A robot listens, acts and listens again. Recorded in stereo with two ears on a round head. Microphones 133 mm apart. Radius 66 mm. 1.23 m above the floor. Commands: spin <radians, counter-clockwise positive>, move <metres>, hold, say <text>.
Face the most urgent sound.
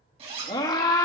spin 0.44
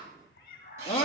spin 2.27
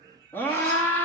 spin 0.26
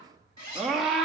say Found it: a scream, straight ahead, 2 to 4 m away.